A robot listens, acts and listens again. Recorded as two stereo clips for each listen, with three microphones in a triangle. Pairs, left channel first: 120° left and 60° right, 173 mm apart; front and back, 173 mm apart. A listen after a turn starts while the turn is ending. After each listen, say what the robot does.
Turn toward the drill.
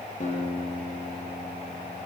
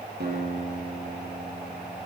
Keep listening.
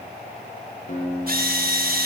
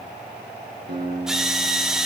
Turn 95° right.
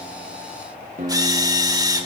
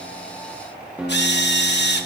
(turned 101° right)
Turn 10° left.
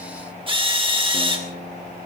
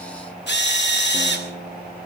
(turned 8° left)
Found it: a drill, straight ahead, 2 to 4 m away.